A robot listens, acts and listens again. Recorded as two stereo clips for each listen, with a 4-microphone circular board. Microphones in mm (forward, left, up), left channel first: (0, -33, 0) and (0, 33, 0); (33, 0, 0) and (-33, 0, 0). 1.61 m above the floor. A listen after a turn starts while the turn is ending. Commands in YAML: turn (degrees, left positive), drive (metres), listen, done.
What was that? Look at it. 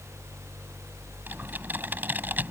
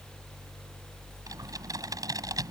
turn: 150
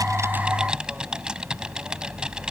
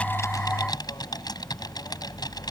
turn: 15
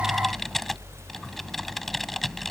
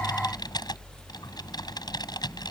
done: "Facing the typing on a keyboard."